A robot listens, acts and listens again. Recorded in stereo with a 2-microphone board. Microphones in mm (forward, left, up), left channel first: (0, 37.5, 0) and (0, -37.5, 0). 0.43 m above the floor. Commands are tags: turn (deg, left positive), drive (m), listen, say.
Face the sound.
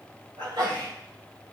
<turn deg="-70"/>
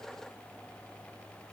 <listen/>
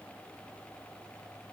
<say>I heard a sneeze, but can't make it out now. It was about straight ahead or 40° right.</say>